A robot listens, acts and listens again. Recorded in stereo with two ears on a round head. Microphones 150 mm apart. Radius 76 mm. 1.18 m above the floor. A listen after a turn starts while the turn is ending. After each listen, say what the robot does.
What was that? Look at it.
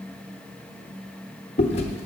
Turn 35° left.
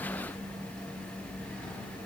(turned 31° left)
Keep listening.
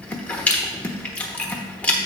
Turn 10° left.
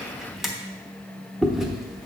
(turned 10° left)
Facing the chewing.